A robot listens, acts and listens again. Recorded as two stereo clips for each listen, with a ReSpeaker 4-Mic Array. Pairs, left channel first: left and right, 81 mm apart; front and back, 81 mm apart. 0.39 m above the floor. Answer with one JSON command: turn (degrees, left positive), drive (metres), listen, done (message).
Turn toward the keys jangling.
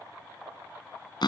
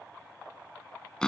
{"listen": true}
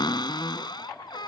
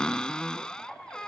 {"listen": true}
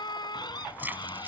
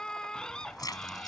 {"turn": -30}
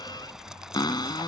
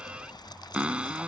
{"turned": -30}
{"turn": -10}
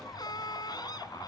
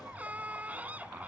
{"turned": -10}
{"listen": true}
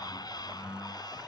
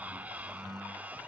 {"listen": true}
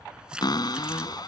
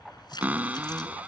{"turn": -10}
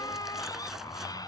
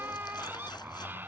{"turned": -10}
{"done": "Found it: keys jangling, straight ahead."}